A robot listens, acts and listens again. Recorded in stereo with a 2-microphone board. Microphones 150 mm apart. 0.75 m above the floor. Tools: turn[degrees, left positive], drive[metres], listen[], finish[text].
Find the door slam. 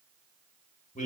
Action: listen[]
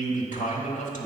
Action: listen[]
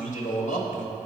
Action: finish[I can't make out a door slam to turn to.]